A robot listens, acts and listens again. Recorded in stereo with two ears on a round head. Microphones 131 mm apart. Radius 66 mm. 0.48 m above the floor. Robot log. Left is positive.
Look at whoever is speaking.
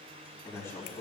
note: The man speaking: about 20° left or 160° left.
cmd yaw +20
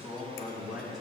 end: Facing the man speaking, 2 to 4 m away.